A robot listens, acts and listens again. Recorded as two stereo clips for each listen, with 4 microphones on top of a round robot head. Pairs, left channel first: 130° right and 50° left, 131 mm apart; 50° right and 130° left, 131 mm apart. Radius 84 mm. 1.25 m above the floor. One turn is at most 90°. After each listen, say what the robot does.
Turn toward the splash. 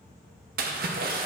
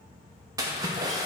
Turn 65° left.
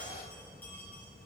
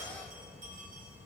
I heard a splash from this way, but can't make it out now.